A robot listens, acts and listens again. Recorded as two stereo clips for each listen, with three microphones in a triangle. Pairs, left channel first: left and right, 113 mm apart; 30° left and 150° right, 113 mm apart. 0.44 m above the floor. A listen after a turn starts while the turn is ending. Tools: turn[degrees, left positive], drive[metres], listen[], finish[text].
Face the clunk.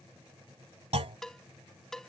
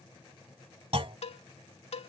Thought: The clunk: 115° right.
Action: turn[-115]
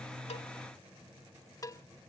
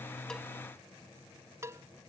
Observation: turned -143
Thought: Nothing new. It was at 25° left.
Action: turn[25]
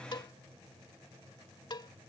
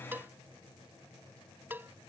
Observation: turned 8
Thought: Nothing new. It was at 20° left.
Action: turn[20]
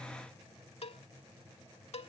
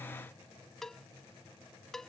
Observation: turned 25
Action: finish[I heard a clunk from this way, but can't make it out now.]